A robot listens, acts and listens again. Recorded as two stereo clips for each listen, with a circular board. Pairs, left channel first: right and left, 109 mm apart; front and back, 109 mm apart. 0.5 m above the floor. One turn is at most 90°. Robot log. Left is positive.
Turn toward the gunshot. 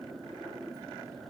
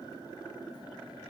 cmd idle
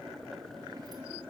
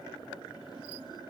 cmd idle
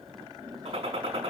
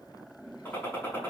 note: The gunshot: 70° left.
cmd yaw +70
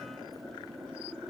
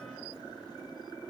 end: Facing where the gunshot came from. I can't hear it now.